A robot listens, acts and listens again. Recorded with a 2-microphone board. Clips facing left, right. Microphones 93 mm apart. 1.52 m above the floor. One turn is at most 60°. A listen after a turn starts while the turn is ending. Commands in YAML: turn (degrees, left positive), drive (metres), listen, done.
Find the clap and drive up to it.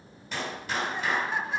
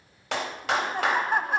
turn: -60
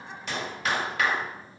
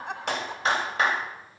turn: -30
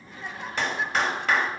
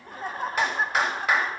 drive: 1.0
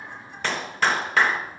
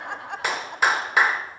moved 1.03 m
turn: -10
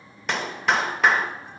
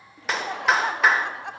drive: 1.0
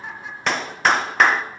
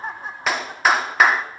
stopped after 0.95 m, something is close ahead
done: "Arrived at the clap, straight ahead."